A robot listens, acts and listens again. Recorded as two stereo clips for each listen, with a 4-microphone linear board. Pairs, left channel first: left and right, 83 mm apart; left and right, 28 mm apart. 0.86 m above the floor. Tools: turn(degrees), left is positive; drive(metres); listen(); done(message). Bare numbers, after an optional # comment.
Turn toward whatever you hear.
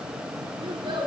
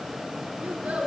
# The child speaking: about 70° right or 110° right.
turn(-70)
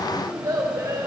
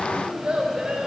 # So it is at 40° right.
turn(-40)
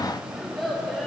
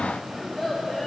done("Facing the child speaking, over 4 m away.")